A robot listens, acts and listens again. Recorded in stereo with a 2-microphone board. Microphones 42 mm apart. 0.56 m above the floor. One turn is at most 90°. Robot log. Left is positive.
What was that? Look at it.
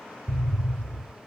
note: The explosion: about 70° right or 110° right.
cmd yaw -70
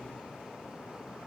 cmd idle
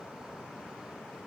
end: I heard an explosion, but can't make it out now. It was about straight ahead or 40° right.